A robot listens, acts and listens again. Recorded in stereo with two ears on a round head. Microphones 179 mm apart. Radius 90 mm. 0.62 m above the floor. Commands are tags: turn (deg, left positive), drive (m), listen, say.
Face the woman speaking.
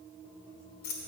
<listen/>
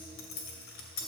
<listen/>
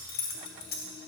<say>I can't make out a woman speaking to turn to.</say>